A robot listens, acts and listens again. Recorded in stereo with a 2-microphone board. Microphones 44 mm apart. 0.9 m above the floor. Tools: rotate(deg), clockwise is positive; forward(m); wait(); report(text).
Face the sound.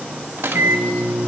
rotate(60)
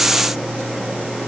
report("Found it: a microwave, straight ahead, under 1 m away.")